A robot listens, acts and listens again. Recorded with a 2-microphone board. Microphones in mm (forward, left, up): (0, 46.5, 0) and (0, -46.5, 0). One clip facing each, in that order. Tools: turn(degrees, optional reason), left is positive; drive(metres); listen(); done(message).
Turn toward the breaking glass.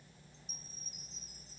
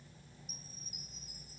listen()
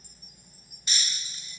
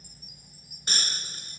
turn(degrees=-50, reason="The breaking glass: about 50° right or 130° right.")
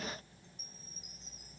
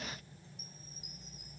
listen()
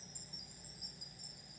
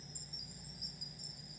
done("I heard breaking glass, but can't make it out now. It was about straight ahead or 80° right.")